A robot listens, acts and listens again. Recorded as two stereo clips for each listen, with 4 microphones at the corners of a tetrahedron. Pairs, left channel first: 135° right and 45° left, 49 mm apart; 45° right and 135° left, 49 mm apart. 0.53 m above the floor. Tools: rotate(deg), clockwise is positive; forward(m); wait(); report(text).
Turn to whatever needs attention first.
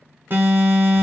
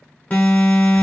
rotate(-10)
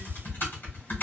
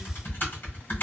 wait()
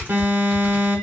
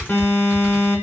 report("Facing the alarm, 1 to 2 m away.")